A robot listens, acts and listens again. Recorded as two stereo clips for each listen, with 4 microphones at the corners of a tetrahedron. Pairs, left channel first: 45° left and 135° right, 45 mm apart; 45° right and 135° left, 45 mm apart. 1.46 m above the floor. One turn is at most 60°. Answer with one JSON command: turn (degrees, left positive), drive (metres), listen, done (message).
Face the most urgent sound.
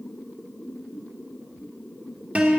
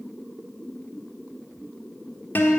{"listen": true}
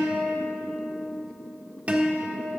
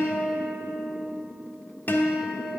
{"listen": true}
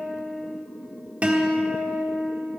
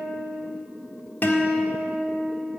{"done": "I can't make out anything urgent, only a guitar."}